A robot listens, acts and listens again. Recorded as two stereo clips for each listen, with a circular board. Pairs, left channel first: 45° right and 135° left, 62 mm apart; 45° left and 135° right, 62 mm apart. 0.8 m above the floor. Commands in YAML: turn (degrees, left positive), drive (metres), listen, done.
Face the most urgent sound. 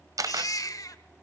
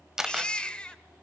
turn: -25
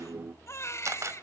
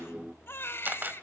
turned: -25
done: "Facing the baby crying, 1 to 2 m away."